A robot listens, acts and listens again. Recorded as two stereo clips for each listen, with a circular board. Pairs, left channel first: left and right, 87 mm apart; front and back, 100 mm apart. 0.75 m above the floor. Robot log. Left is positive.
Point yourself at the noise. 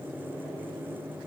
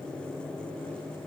cmd idle
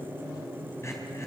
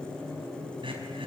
note: The throat clearing: 150° left.
cmd yaw +150
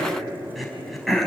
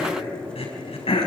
end: Found it: throat clearing, straight ahead.